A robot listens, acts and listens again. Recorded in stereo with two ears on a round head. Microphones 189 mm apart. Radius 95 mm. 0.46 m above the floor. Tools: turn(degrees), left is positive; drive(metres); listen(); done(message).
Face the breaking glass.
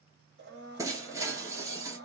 turn(degrees=-15)
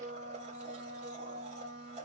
listen()
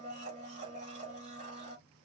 done("I heard breaking glass, but can't make it out now. It was about straight ahead or 150° right.")